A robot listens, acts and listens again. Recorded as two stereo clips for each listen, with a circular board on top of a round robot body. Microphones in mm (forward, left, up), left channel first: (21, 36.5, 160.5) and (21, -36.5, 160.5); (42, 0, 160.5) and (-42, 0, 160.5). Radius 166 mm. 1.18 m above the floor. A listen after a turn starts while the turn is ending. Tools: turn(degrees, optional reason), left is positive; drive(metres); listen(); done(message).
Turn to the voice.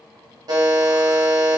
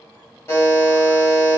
listen()
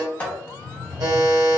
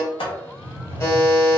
listen()
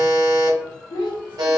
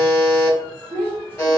turn(degrees=65, reason="The child speaking: 65° left.")
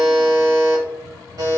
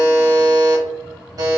listen()
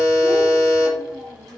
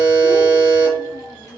done("Facing the child speaking.")